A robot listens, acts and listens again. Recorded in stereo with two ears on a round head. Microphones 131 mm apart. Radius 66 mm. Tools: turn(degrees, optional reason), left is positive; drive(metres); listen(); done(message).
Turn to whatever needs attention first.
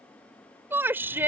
turn(degrees=-30)
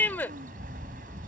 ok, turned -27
turn(degrees=15, reason="So it is at 15° left.")
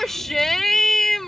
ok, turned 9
done("Facing the shout.")